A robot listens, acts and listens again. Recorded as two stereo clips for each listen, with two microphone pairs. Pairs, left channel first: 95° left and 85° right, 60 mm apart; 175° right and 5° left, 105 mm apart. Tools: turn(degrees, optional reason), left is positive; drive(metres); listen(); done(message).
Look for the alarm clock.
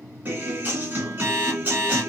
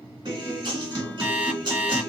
turn(degrees=-65, reason="The alarm clock: 65° right.")
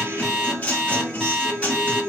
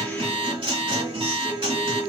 done("Found it: an alarm clock, straight ahead.")